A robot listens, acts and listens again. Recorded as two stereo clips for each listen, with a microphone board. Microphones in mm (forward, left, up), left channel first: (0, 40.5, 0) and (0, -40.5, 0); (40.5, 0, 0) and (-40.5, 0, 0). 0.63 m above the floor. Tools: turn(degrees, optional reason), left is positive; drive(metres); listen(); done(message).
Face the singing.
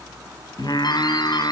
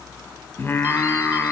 turn(degrees=65, reason="The singing: 65° left.")
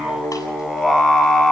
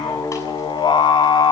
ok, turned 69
done("Facing the singing, over 4 m away.")